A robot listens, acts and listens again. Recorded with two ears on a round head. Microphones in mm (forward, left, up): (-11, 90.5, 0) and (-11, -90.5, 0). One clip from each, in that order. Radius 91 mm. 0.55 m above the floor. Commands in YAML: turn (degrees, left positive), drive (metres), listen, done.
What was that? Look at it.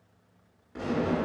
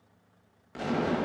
turn: -65
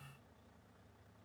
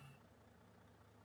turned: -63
listen: true
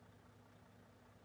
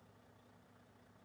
done: "I heard an explosion, but can't make it out now. It was about 5° right or 50° right."